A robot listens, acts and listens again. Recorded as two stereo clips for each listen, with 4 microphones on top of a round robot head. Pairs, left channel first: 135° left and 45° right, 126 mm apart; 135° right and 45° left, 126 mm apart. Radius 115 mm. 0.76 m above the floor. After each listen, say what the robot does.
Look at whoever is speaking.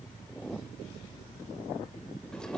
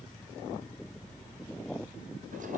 Keep listening.
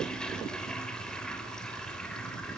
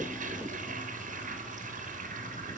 Keep listening.
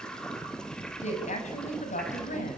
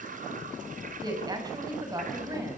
Turn 110° left.
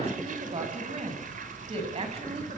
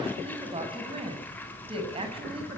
Found it: a woman speaking, straight ahead, over 4 m away.